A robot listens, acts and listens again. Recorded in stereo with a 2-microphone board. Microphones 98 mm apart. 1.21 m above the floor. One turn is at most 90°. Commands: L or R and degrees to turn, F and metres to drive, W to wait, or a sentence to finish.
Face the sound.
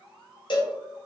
L55
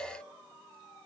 W
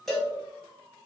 Found it: a cowbell, straight ahead.